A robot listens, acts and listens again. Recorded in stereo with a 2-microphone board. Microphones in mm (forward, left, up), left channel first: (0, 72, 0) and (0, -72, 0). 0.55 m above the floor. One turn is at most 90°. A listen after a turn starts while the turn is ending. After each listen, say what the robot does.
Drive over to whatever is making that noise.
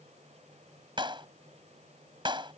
Turn 35° right.
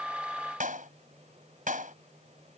Turn 90° right.
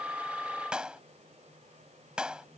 Drive 1.0 m forward.
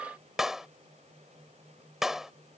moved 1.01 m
Drive 1.0 m forward.
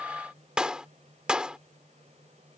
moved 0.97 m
Drive 1.0 m forward.
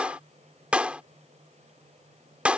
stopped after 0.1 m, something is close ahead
Turn 10° right.
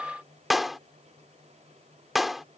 Arrived at the clap, straight ahead.